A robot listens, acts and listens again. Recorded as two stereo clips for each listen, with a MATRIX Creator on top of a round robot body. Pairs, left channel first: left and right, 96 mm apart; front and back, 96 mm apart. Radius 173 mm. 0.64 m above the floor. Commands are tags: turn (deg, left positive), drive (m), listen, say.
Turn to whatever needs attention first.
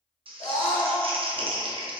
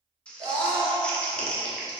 <turn deg="140"/>
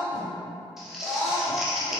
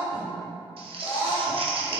<turn deg="40"/>
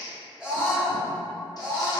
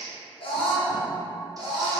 <turn deg="-10"/>
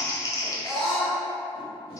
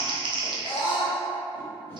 <say>Facing the scream.</say>